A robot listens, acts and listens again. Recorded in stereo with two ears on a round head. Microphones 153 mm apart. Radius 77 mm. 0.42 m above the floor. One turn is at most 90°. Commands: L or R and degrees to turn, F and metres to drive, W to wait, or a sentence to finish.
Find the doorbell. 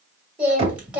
W
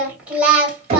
W
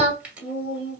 I can't make out a doorbell to turn to.